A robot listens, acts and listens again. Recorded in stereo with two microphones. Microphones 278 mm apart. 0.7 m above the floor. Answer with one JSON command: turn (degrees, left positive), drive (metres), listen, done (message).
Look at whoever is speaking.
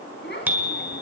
{"turn": 40}
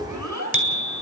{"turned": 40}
{"turn": 100}
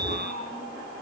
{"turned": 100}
{"turn": 35}
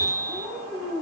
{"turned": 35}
{"done": "Found it: a child speaking, straight ahead, over 4 m away."}